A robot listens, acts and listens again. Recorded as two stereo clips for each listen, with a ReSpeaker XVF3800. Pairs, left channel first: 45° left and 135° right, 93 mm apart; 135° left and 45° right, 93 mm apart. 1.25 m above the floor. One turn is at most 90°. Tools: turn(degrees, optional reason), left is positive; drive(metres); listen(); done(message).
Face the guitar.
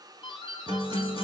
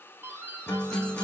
turn(degrees=-90, reason="The guitar: 165° right.")
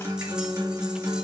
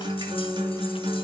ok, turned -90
turn(degrees=-80, reason="The guitar is now 80° right.")
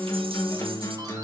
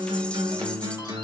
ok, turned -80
turn(degrees=-10, reason="The guitar is now 10° right.")
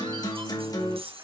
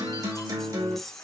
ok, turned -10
done("Facing the guitar, 2 to 4 m away.")